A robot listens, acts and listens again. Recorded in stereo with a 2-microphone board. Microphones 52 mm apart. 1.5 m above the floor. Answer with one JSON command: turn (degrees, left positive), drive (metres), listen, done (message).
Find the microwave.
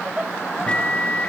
{"turn": 25}
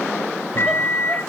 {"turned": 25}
{"turn": 130}
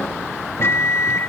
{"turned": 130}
{"turn": 55}
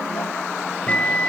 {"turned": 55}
{"turn": 25}
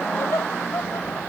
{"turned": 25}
{"listen": true}
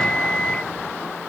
{"turn": 15}
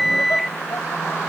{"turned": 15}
{"done": "Facing the microwave."}